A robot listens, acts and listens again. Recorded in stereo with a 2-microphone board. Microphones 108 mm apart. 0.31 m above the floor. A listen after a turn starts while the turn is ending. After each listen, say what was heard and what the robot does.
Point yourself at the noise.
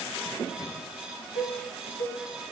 The cowbell: about 65° right or 115° right. Turn 65° right.
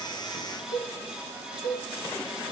So it is at 40° right. Turn 40° right.
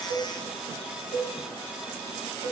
The cowbell is now 15° right. Turn 15° right.
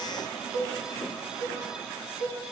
Facing the cowbell.